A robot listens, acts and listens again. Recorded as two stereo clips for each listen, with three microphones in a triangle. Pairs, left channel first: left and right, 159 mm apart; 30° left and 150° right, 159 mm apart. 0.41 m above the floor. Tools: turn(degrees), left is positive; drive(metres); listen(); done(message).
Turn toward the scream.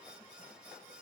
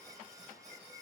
listen()
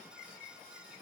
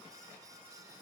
listen()
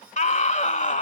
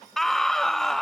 turn(degrees=115)
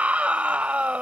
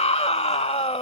turn(degrees=-10)
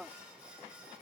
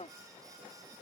done("Facing the scream.")